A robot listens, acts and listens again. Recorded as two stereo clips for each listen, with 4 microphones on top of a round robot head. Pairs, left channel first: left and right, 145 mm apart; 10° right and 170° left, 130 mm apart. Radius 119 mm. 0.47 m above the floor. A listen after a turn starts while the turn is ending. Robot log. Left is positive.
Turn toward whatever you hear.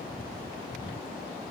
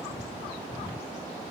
cmd idle
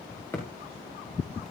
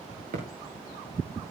note: The thud: 165° left.
cmd yaw +165
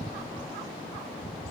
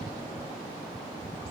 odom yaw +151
note: Nothing new. It was at 15° left.
cmd yaw +15
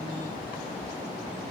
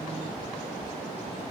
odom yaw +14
end: I heard a thud from this way, but can't make it out now.